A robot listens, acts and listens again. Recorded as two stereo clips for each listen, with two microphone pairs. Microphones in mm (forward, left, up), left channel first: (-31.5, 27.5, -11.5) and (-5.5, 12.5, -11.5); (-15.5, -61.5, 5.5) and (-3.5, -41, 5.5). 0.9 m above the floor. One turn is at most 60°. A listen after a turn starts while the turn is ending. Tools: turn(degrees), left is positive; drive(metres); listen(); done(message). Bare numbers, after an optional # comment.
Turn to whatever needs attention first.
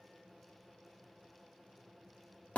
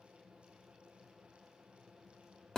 listen()
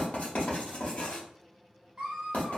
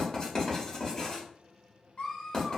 # The scream: 90° right.
turn(-60)
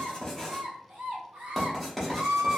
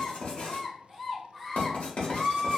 # The scream is now 40° right.
turn(-40)
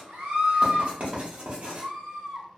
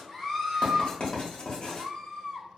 # The scream is now 10° left.
turn(10)
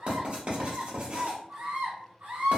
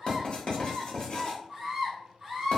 done("Facing the scream, 1 to 2 m away.")